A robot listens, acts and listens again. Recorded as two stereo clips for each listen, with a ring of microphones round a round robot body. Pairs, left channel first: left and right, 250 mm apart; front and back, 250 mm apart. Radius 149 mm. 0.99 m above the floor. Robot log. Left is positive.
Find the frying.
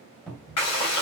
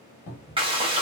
note: The frying: 110° left.
cmd yaw +110
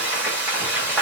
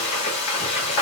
end: Facing the frying, 1 to 2 m away.